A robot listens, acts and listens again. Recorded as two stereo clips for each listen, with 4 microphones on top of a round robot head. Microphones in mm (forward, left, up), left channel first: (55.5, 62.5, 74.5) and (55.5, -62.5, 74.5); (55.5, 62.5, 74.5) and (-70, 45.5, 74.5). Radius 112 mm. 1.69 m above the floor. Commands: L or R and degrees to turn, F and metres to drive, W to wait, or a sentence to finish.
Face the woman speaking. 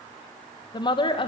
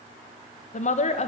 L40
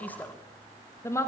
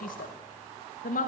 L25
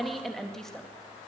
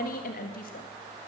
Found it: a woman speaking, straight ahead, 2 to 4 m away.